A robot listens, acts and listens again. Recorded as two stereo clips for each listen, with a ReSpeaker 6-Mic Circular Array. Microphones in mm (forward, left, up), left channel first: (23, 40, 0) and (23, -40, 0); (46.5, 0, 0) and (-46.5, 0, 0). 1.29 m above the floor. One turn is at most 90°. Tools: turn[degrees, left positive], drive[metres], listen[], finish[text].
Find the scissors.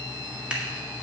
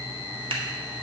Action: listen[]
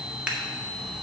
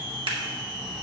Thought: The scissors: 165° right.
Action: turn[-90]
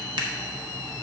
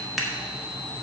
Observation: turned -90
Thought: The scissors is now 90° right.
Action: turn[-90]
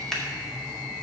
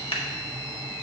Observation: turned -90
Action: finish[Facing the scissors.]